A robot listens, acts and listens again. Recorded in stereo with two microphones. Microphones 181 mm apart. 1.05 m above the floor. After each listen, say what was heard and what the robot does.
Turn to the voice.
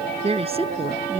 The woman speaking: about 30° right or 150° right. Turn 30° right.
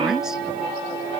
Keep listening.
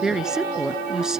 Facing the woman speaking.